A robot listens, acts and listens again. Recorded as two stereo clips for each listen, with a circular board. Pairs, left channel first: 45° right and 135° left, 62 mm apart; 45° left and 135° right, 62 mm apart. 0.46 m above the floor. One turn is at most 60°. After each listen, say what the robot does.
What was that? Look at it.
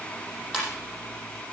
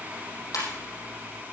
Turn 45° left.
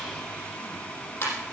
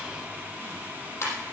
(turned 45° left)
Facing the ringtone, over 4 m away.